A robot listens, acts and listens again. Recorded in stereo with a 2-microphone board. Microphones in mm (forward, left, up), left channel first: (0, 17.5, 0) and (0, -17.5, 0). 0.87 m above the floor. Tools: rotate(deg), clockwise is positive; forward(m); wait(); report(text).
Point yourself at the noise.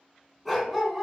rotate(30)
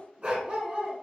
rotate(145)
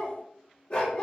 rotate(-35)
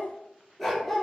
rotate(-10)
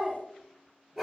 report("Found it: a dog barking, straight ahead.")